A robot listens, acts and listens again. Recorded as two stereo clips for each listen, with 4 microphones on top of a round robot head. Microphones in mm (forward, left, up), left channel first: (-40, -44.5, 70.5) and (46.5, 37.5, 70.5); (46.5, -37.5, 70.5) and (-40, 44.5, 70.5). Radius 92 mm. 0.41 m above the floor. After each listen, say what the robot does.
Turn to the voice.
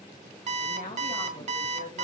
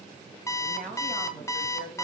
Turn 115° right.
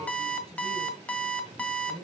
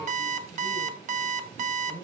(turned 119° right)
Turn 25° left.
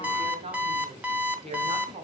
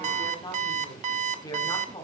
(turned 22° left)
Turn 10° left.
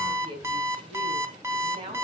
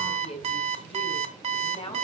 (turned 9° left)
Found it: a woman speaking, straight ahead.